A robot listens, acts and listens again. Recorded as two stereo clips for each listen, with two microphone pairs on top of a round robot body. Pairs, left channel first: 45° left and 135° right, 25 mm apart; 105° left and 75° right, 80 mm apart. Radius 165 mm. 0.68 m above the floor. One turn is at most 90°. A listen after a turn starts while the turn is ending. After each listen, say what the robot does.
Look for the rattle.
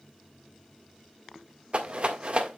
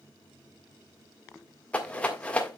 Turn 90° left.
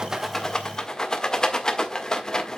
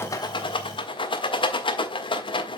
Turn 90° left.
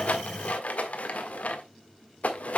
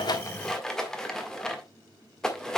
Turn 20° left.
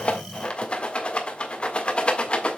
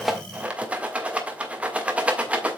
Facing the rattle.